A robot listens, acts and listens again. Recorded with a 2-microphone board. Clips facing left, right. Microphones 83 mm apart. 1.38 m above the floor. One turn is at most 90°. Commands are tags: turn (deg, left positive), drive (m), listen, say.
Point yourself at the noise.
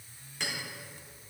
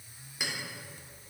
<turn deg="-30"/>
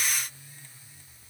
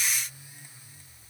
<listen/>
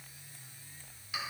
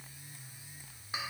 <turn deg="-90"/>
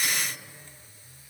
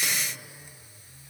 <turn deg="-55"/>
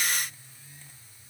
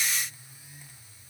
<listen/>
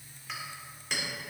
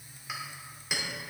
<turn deg="-10"/>
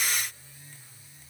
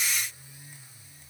<listen/>
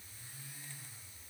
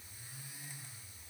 <listen/>
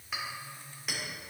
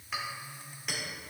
<say>Found it: a clink, straight ahead.</say>